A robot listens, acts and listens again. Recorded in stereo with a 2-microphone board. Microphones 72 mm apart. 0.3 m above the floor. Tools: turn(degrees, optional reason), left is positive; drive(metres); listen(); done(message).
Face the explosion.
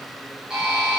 listen()
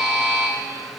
listen()
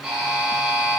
done("I can't make out an explosion to turn to.")